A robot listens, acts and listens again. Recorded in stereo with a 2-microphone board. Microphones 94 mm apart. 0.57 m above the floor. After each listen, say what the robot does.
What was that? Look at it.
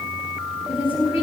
Turn 90° left.
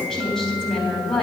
Facing the woman speaking.